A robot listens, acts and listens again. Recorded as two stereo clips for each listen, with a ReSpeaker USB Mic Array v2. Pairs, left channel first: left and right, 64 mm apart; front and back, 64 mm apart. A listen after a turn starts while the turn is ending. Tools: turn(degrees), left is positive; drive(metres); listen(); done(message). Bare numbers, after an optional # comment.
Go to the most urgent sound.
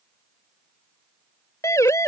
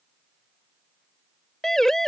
# The siren: 80° left.
turn(80)
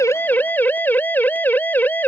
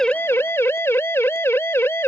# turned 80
# The siren is now 40° left.
turn(40)
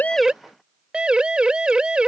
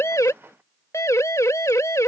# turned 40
# The siren is now 20° right.
turn(-20)
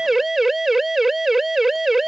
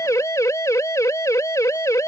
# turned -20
drive(1.0)
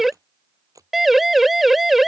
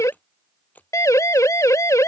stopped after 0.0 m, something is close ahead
done("Something is in my way. I am facing the siren but have not reached it.")